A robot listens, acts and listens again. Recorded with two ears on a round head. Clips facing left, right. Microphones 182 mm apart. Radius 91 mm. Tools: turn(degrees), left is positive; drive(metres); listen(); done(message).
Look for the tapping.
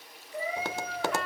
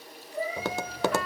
turn(degrees=-75)
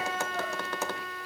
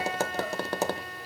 turn(degrees=-30)
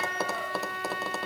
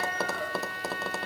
done("Found it: tapping, straight ahead, under 1 m away.")